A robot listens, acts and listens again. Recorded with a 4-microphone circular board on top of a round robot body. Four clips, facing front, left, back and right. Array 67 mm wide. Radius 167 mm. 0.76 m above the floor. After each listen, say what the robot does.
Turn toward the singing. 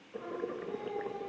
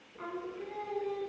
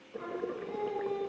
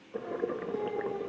Turn 110° left.
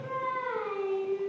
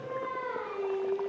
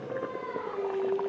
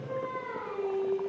Turn 10° left.
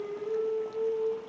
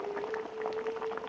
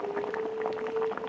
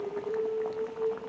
Facing the singing.